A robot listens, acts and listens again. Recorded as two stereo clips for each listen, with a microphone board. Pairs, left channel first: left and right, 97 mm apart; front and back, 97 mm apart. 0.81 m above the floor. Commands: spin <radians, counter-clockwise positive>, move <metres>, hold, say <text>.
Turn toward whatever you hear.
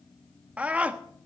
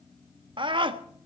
spin -2.88
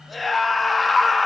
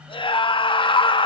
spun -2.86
say Found it: a scream, straight ahead.